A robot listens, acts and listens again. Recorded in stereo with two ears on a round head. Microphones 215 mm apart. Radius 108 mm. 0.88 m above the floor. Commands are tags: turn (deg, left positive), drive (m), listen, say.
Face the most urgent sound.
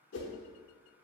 <listen/>
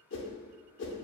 <listen/>
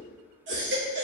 <turn deg="-50"/>
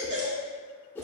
<turn deg="-70"/>
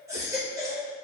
<turn deg="-15"/>
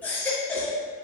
<turn deg="10"/>
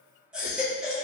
<say>Facing the baby crying.</say>